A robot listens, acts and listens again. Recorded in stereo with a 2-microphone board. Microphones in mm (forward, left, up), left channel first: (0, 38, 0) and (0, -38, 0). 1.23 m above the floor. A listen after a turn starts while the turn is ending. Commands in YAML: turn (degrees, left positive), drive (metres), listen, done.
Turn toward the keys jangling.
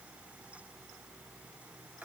listen: true
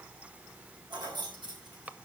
turn: -75
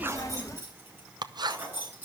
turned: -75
turn: -25
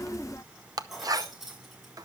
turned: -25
done: "Found it: keys jangling, straight ahead, over 4 m away."